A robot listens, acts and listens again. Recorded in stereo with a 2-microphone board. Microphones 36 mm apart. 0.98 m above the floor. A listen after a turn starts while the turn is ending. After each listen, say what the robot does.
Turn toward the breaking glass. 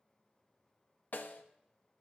Keep listening.
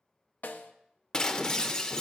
Turn 20° left.
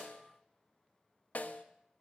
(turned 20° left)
Keep listening.
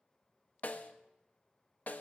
I heard breaking glass, but can't make it out now. It was about straight ahead or 140° left.